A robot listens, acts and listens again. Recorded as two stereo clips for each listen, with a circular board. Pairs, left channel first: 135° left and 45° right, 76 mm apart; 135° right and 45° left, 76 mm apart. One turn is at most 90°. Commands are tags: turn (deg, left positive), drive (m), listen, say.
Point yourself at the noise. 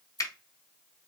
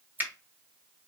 <turn deg="90"/>
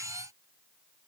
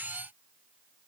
<turn deg="15"/>
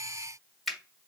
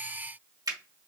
<turn deg="45"/>
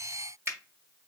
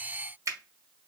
<say>Found it: a finger snap, straight ahead.</say>